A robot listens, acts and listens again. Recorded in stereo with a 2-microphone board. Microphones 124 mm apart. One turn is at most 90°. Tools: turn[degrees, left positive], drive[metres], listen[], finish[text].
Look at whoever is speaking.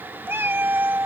Action: listen[]
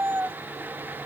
Action: listen[]
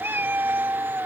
Action: finish[I can't make out anyone speaking, only a cat meowing.]